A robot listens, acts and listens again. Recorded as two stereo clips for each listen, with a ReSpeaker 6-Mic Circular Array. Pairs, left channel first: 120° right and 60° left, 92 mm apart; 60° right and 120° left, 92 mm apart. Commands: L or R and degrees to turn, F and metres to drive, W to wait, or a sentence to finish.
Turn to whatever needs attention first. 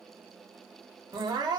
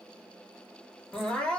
L20
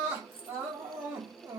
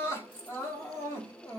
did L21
Facing the crying.